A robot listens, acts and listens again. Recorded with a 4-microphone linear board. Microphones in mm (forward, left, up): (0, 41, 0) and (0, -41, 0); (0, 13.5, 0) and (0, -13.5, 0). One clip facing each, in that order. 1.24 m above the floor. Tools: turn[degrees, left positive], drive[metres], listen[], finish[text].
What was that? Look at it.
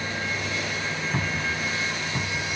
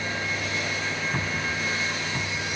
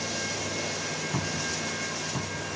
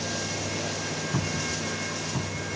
Action: turn[30]
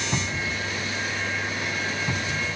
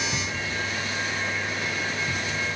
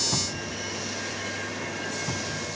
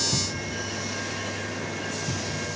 Thought: So it is at 145° left.
Action: turn[145]
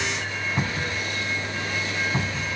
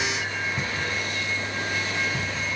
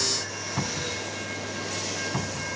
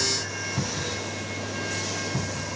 Thought: The cupboard door is now 45° left.
Action: turn[45]
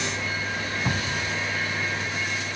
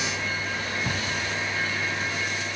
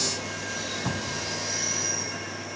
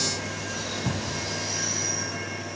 Thought: The cupboard door is now 20° left.
Action: turn[20]
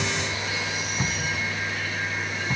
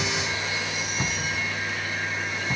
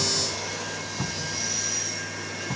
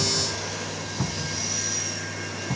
Action: finish[Facing the cupboard door.]